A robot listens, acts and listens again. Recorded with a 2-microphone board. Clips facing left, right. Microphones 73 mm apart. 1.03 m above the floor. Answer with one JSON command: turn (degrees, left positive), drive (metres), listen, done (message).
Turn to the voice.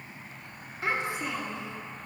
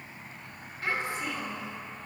{"turn": 20}
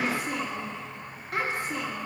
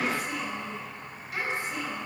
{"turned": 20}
{"turn": 140}
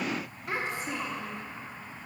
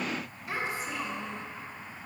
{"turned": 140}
{"turn": 60}
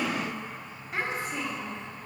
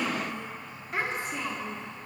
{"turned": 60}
{"done": "Found it: a child speaking, straight ahead, 1 to 2 m away."}